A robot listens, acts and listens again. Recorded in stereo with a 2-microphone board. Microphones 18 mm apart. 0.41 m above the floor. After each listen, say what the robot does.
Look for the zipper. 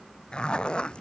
Turn 60° left.
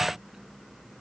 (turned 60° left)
Keep listening.
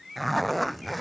Found it: a zipper, straight ahead.